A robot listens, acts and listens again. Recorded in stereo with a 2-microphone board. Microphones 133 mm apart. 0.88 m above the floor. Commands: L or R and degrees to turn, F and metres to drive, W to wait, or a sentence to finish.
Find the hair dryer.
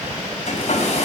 L55
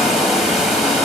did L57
Found it: a hair dryer, straight ahead, over 4 m away.